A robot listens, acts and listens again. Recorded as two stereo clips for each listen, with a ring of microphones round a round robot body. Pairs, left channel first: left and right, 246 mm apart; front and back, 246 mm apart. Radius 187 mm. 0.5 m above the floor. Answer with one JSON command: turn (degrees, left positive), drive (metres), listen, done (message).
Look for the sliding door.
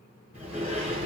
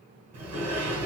{"turn": -175}
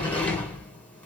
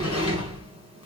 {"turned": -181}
{"done": "Found it: a sliding door, straight ahead, 2 to 4 m away."}